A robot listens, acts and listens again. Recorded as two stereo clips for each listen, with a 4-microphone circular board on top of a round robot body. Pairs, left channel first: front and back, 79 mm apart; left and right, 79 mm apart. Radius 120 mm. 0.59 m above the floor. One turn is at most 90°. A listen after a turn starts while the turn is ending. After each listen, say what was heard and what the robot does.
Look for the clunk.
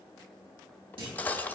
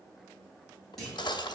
The clunk: 175° left. Turn 90° left.
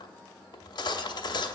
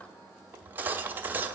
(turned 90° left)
Nothing new. It was at 85° left. Turn 85° left.
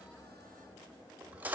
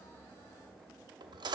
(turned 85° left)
Facing where the clunk came from. I can't hear it now.